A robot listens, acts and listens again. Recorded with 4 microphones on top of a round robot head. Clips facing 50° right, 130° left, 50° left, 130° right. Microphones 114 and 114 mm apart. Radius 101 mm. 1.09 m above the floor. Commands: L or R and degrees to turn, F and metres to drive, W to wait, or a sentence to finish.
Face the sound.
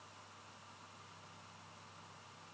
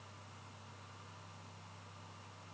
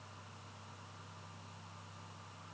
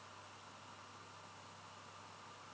W
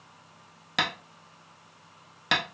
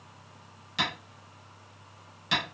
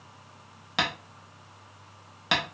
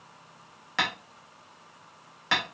R20
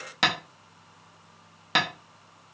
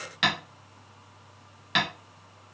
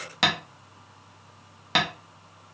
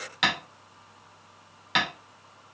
Facing the tapping, under 1 m away.